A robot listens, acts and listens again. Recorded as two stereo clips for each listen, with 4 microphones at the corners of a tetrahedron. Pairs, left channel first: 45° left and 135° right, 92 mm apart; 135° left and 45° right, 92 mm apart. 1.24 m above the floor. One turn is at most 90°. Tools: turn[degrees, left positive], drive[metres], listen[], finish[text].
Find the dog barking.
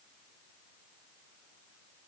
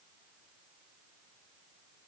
Action: listen[]
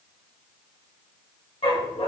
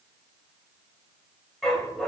Thought: The dog barking: 50° left.
Action: turn[50]
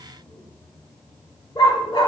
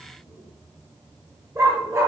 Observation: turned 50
Thought: The dog barking is now 15° left.
Action: turn[15]
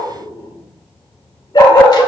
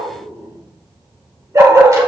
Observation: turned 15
Thought: The dog barking is now 10° left.
Action: turn[10]
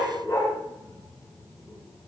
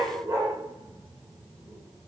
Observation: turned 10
Action: finish[Facing the dog barking.]